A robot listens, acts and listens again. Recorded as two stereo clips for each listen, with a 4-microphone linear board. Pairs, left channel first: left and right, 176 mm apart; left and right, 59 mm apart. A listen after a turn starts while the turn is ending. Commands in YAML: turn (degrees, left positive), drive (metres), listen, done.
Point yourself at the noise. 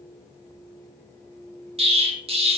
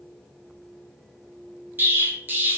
turn: -35
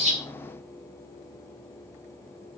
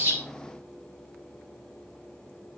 listen: true
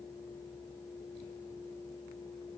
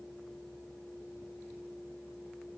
done: "I heard an explosion, but can't make it out now. It was about straight ahead or 110° right."